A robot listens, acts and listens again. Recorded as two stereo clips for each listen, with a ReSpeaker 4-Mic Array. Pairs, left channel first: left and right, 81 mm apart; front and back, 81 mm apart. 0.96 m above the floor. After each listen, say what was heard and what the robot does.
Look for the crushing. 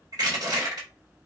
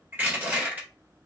The crushing: 115° right. Turn 115° right.
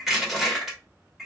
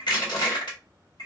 Found it: crushing, straight ahead.